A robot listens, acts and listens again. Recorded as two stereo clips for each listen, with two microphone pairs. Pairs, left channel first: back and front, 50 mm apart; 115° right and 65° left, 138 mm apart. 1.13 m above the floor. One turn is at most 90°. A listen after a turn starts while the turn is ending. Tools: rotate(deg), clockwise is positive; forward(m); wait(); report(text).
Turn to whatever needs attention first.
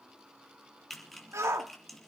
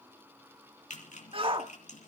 rotate(-15)
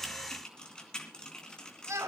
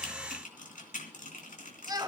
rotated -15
report("Found it: a shout, straight ahead, 1 to 2 m away.")